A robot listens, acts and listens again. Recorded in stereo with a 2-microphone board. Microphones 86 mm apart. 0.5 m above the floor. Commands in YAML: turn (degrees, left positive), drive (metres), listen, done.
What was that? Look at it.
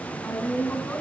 turn: 20
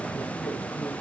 listen: true
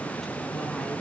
listen: true
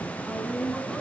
done: "Facing the woman speaking."